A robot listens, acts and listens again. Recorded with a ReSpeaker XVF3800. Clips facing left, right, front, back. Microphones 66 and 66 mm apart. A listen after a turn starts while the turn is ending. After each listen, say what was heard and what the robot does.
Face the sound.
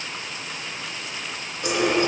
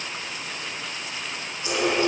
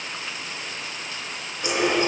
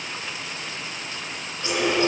The running tap: 70° left. Turn 70° left.
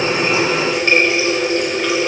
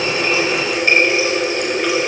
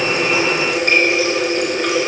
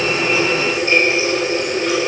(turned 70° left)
Found it: a running tap, straight ahead.